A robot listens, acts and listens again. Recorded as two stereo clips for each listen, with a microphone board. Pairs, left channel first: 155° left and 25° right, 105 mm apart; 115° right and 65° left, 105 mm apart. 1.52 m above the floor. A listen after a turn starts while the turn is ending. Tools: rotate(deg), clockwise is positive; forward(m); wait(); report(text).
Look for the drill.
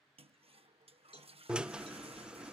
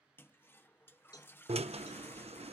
rotate(-60)
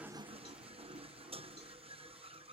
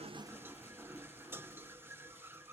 report("Facing the drill.")